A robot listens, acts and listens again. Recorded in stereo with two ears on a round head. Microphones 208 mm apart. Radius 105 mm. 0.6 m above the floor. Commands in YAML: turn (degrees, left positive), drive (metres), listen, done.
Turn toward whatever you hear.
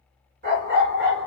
turn: -60
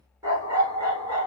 turn: -25
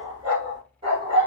turn: -25
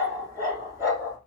turn: -15
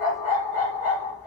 done: "Facing the dog barking."